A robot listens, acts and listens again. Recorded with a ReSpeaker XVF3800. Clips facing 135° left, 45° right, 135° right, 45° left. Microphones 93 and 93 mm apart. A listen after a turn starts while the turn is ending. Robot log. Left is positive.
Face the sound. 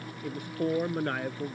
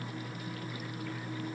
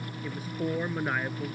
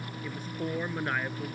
note: The man speaking: 140° left.
cmd yaw +140
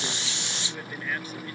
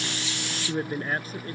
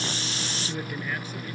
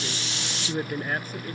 end: Found it: a man speaking, straight ahead.